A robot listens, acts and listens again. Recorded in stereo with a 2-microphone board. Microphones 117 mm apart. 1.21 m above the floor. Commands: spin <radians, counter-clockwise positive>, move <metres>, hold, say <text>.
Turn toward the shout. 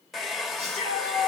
spin -1.13
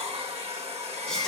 hold
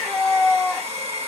say Found it: a shout, straight ahead, 2 to 4 m away.